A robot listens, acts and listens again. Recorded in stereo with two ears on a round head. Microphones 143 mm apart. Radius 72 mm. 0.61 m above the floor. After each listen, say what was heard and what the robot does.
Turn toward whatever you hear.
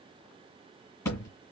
The thud: about 20° left or 160° left. Turn 20° left.
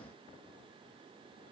Keep listening.
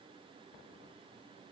I heard a thud, but can't make it out now. It was about straight ahead or 140° left.